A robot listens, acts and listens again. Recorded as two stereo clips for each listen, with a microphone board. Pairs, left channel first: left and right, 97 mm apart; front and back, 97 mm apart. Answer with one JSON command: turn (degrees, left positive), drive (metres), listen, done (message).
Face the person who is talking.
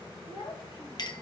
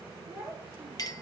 {"turn": 110}
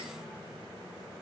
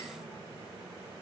{"listen": true}
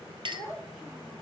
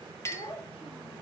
{"done": "Found it: a child speaking, straight ahead."}